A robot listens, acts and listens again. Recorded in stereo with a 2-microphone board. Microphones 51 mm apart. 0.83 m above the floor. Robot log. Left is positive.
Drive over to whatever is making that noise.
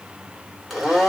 cmd yaw -30
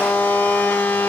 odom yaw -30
note: So it is at 25° left.
cmd yaw +25
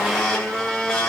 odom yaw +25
note: The blender is now 10° left.
cmd yaw +10
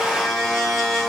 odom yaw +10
cmd fwd 1.0
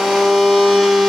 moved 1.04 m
cmd fwd 1.0
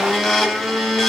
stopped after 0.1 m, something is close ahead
end: I am next to the blender.